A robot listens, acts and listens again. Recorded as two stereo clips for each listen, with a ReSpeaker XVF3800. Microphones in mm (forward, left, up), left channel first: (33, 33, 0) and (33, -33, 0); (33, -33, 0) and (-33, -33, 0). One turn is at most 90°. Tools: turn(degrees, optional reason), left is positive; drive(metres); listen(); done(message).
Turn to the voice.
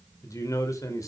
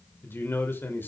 turn(degrees=55, reason="The man speaking: 55° left.")
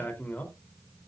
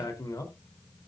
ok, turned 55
turn(degrees=20, reason="The man speaking is now 20° left.")
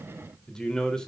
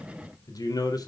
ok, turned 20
turn(degrees=10, reason="The man speaking is now 10° left.")
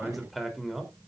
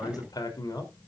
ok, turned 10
done("Found it: a man speaking, straight ahead, 2 to 4 m away.")